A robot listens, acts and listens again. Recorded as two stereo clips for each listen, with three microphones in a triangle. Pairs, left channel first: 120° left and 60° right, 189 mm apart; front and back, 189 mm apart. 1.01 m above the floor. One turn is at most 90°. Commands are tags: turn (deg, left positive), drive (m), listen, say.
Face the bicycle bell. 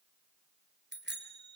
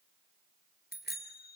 <turn deg="-35"/>
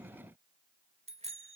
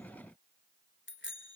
<say>Facing the bicycle bell, 2 to 4 m away.</say>